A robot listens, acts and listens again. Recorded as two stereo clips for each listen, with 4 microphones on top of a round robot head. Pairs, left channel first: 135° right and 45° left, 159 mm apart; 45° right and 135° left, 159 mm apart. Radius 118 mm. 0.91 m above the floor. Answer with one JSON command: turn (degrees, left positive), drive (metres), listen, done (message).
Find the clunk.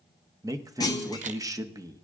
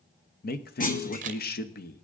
{"turn": -70}
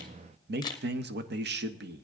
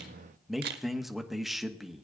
{"done": "I heard a clunk from this way, but can't make it out now."}